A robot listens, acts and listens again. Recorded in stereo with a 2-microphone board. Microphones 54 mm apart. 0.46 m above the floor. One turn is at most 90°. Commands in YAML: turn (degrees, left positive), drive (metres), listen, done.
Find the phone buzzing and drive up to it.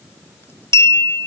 listen: true
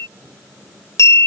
listen: true
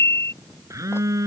turn: -90
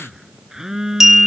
turn: -10
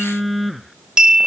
drive: 1.0
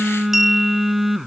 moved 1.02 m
drive: 1.0
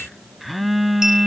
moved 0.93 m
drive: 1.0
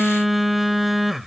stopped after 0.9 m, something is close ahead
done: "I am next to the phone buzzing."